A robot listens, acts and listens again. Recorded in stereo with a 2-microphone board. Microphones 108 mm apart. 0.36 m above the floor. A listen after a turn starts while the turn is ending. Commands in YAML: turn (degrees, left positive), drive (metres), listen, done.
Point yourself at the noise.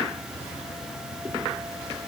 listen: true
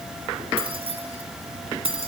turn: -60
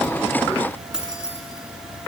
done: "Found it: keys jangling, straight ahead."